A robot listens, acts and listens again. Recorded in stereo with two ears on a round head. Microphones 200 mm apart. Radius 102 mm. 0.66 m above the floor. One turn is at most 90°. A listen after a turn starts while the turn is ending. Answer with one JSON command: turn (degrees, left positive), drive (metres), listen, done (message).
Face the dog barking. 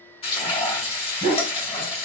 {"turn": -25}
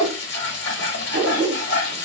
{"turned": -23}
{"turn": -35}
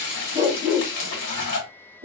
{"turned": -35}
{"turn": -25}
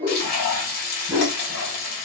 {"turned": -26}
{"turn": -15}
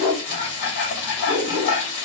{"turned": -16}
{"done": "Found it: a dog barking, straight ahead, 1 to 2 m away."}